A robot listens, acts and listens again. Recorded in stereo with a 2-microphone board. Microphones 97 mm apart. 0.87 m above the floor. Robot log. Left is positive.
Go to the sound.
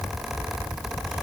cmd idle
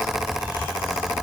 cmd idle
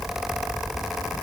end: I can't make out anything to turn to.